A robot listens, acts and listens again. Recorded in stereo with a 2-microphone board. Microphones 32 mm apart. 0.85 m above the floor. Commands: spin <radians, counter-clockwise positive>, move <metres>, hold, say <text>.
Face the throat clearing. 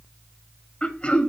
spin 0.70
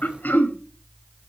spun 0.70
spin 1.75
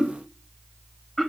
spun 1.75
say Found it: throat clearing, straight ahead, 1 to 2 m away.